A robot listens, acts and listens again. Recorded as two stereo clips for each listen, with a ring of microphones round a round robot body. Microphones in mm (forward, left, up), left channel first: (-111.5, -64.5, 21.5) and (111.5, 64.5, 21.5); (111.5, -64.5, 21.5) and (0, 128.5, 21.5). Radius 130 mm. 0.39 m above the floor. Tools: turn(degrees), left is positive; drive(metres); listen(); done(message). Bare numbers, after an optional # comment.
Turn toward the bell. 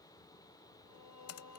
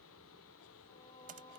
listen()
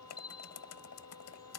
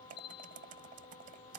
# The bell: 95° right.
turn(-95)
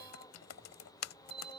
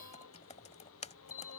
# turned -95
# The bell is now 40° right.
turn(-40)
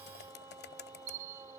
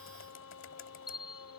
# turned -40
# The bell is now 15° right.
turn(-15)
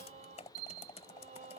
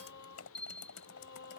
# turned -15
done("Found it: a bell, straight ahead.")